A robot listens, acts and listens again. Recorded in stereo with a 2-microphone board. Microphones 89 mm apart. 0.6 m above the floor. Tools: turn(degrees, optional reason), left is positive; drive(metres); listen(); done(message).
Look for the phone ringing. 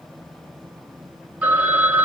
turn(degrees=-30)
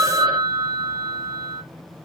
turn(degrees=-130, reason="So it is at 130° right.")
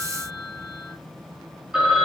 turn(degrees=-10, reason="The phone ringing is now 10° right.")
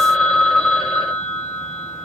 done("Found it: a phone ringing, straight ahead, 1 to 2 m away.")